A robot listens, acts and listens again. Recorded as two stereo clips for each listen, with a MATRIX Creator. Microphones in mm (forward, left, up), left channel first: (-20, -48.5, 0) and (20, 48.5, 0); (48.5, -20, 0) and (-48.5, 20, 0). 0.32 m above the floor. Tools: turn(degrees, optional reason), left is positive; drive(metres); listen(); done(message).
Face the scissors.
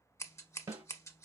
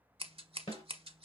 turn(degrees=-175, reason="The scissors: 175° right.")
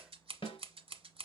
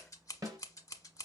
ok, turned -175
turn(degrees=35, reason="The scissors is now 35° left.")
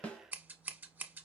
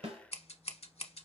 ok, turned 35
done("Facing the scissors, under 1 m away.")